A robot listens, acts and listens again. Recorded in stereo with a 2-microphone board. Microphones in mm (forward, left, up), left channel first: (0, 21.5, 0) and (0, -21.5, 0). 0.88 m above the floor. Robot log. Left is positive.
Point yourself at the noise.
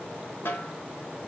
note: The snare drum: about 65° left or 115° left.
cmd yaw +65
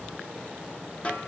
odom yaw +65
note: So it is at 35° left.
cmd yaw +35
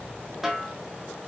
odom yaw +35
end: Facing the snare drum, 1 to 2 m away.